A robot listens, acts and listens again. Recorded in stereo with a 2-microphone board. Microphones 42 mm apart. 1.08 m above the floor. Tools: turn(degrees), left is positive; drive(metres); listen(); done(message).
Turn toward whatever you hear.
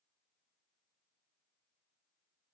listen()
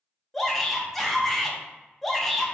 turn(degrees=30)
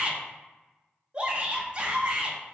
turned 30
turn(degrees=-30)
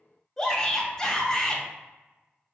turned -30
turn(degrees=15)
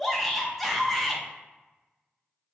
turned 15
done("Found it: a shout, straight ahead, 1 to 2 m away.")